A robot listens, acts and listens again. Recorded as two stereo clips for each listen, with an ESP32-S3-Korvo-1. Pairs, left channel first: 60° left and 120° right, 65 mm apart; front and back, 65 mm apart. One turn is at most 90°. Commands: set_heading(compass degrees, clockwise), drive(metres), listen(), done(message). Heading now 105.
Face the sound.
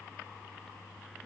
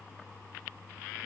listen()
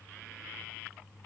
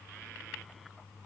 listen()
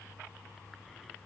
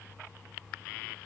done("I can't make out anything to turn to.")